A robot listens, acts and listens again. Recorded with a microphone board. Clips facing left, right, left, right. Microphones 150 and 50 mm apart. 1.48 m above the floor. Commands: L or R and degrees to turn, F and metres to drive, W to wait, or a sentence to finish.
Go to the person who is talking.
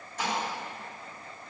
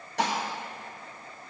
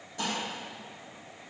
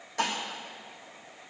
W
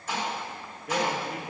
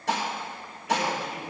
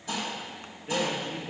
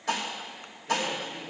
L55
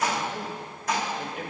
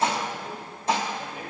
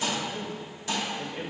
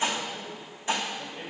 L75
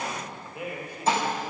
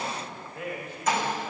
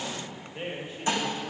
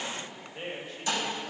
L15
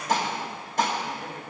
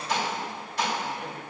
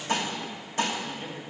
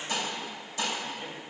F1.0
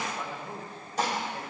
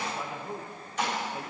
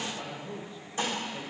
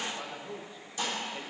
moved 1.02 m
R15
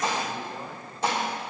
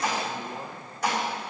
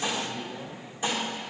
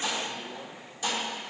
F1.0
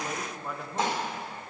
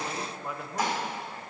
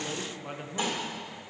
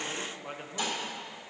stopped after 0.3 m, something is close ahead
I am next to the man speaking.